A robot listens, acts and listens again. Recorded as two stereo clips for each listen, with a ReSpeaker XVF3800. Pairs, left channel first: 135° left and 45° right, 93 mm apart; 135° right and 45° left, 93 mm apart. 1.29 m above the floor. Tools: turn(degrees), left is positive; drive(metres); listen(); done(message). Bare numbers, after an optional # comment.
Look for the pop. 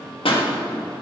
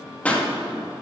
# The pop: 150° left.
turn(150)
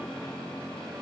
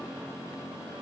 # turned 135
# Nothing new. It was at 15° left.
turn(15)
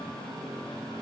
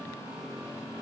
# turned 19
done("I heard a pop from this way, but can't make it out now.")